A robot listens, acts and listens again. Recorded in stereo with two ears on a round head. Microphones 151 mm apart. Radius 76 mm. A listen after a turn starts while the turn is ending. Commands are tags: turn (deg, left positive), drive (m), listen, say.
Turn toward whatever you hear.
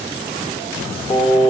<turn deg="25"/>
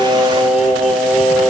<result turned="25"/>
<say>Facing the singing.</say>